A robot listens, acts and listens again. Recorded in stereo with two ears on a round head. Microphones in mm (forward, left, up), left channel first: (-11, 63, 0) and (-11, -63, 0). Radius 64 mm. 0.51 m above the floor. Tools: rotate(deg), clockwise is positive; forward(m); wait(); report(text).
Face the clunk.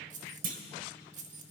rotate(60)
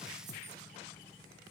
wait()
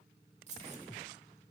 report("I heard a clunk, but can't make it out now. It was about straight ahead or 60° right.")